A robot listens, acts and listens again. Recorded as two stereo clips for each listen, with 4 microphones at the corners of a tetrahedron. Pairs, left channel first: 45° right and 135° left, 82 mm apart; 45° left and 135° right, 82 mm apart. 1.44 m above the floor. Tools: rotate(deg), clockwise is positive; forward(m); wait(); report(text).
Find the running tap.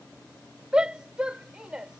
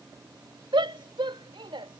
wait()
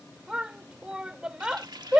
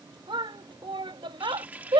rotate(-155)
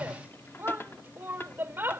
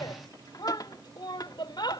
rotate(-15)
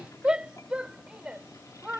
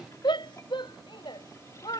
wait()
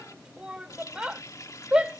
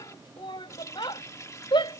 report("Facing the running tap.")